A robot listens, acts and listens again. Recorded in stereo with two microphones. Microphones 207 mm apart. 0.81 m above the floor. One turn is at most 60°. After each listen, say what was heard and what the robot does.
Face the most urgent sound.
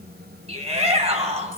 The shout: about 30° right or 150° right. Turn 30° right.
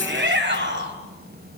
So it is at 120° right. Turn 60° right.
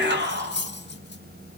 The shout is now 55° right. Turn 55° right.
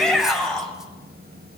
Found it: a shout, straight ahead.